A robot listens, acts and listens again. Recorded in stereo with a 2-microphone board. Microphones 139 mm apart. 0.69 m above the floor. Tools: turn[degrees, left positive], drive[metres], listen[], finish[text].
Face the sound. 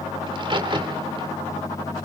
Thought: The crack: about 40° right or 140° right.
Action: turn[-40]
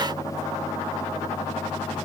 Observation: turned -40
Action: listen[]
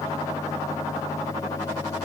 Action: finish[I heard a crack, but can't make it out now. It was about straight ahead or 100° right.]